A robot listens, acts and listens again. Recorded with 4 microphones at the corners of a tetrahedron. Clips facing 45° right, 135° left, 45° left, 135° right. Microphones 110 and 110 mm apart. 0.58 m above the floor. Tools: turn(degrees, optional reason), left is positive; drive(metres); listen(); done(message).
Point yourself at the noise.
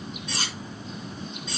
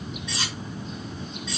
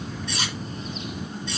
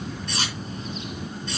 turn(degrees=-90, reason="The cutlery clinking: 90° right.")
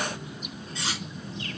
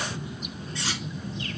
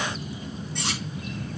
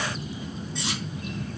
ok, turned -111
turn(degrees=20, reason="The cutlery clinking is now 20° left.")
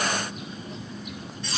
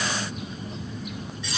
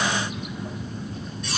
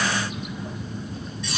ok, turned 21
done("Found it: cutlery clinking, straight ahead.")